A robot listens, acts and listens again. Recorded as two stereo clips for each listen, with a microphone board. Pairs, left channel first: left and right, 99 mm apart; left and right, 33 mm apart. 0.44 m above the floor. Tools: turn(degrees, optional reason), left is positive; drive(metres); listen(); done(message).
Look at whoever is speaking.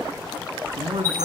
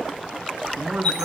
turn(degrees=-75, reason="The man speaking: about 75° right or 105° right.")
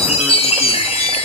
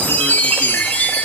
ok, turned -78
listen()
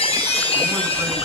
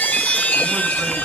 listen()
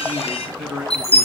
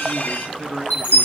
done("Facing the man speaking.")